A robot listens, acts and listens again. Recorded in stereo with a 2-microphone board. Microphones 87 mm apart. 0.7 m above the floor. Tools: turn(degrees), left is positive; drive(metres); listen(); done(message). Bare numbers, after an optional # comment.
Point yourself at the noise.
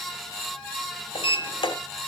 turn(90)
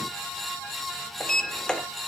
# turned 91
# So it is at 10° left.
turn(10)
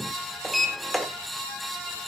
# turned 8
done("Facing the sliding door, 1 to 2 m away.")